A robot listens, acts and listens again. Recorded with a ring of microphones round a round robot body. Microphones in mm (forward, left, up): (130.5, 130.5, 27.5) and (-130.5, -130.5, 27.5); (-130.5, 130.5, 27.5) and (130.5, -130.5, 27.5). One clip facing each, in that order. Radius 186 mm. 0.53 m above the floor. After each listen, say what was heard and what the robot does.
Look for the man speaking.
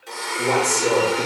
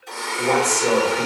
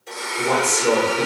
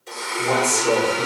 The man speaking: 115° left. Turn 115° left.
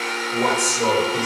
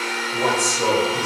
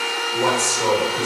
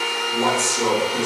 Found it: a man speaking, straight ahead.